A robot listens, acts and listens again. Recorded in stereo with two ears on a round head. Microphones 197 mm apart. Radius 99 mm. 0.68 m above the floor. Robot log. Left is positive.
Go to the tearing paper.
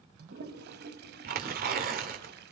note: The tearing paper: about 45° right or 135° right.
cmd yaw -45
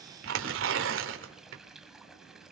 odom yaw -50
note: So it is at 80° right.
cmd yaw -80
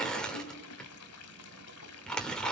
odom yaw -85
cmd fwd 1.0
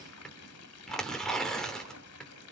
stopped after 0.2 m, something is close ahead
end: Something is in my way. I am facing the tearing paper but have not reached it.